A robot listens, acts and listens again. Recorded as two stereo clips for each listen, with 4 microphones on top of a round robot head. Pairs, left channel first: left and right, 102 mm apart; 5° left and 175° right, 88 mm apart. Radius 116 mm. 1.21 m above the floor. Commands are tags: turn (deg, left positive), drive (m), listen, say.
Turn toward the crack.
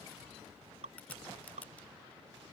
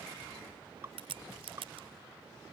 <turn deg="170"/>
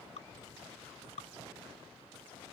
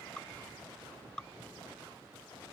<say>Facing where the crack came from. I can't hear it now.</say>